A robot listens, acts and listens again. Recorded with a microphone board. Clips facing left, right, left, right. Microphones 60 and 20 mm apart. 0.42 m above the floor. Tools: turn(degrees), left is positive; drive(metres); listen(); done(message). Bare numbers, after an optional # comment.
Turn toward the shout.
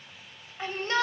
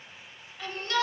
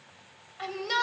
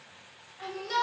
# The shout: about 30° left or 150° left.
turn(30)
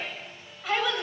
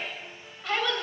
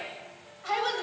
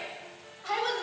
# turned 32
done("Found it: a shout, straight ahead, 2 to 4 m away.")